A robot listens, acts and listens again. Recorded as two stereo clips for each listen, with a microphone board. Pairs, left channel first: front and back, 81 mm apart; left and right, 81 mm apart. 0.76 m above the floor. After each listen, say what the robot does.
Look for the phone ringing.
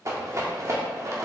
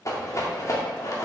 Keep listening.
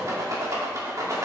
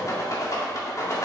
Keep listening.
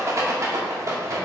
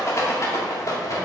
I can't make out a phone ringing to turn to.